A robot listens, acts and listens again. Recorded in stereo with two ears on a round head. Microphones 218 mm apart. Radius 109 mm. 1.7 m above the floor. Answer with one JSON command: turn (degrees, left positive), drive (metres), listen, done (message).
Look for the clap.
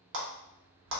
{"turn": -55}
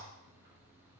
{"listen": true}
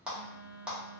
{"done": "Facing the clap, under 1 m away."}